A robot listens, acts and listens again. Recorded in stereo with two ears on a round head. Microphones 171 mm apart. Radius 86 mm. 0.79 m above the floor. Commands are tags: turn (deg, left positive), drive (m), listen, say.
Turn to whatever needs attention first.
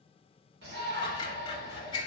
<turn deg="-60"/>
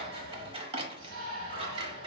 <turn deg="-55"/>
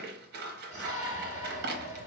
<turn deg="-15"/>
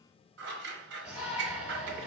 <say>Facing the shout, 1 to 2 m away.</say>